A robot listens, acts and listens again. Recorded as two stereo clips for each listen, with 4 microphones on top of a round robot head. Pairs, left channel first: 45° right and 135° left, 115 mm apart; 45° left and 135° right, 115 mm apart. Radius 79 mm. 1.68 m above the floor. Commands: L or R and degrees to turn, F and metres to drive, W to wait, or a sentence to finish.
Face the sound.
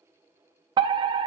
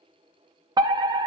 L175
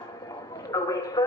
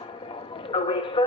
L10
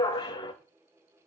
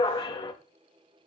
Found it: a fire alarm, straight ahead, 1 to 2 m away.